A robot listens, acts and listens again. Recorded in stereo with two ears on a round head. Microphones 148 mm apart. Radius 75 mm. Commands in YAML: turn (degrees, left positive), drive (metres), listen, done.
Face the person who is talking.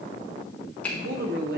turn: -60
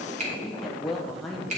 done: "Facing the woman speaking, 1 to 2 m away."